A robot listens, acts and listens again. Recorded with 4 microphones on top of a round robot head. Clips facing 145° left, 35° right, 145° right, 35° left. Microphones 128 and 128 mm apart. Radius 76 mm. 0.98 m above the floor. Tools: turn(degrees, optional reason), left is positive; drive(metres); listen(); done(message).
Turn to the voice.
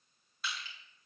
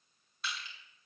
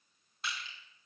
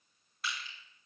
listen()
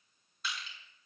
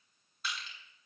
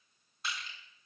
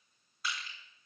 listen()
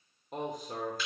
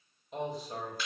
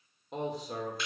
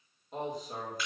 turn(degrees=-170, reason="The man speaking: 170° right.")
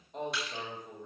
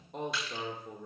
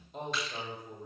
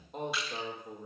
done("Facing the man speaking.")